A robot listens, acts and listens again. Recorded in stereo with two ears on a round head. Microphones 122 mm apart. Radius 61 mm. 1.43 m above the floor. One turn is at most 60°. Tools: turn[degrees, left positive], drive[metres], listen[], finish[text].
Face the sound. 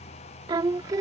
Thought: The singing: about 25° right or 155° right.
Action: turn[-25]
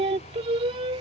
Thought: The singing: about 40° right or 140° right.
Action: turn[-40]
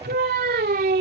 Thought: So it is at 110° right.
Action: turn[-60]
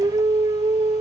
Thought: The singing is now 35° right.
Action: turn[-35]
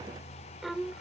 Action: finish[Found it: singing, straight ahead.]